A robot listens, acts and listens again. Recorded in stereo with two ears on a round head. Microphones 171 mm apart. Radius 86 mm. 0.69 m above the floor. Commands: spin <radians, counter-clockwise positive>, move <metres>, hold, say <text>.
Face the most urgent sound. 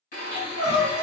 spin 1.22
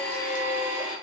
hold
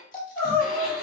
spin 0.17
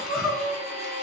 say Facing the crying.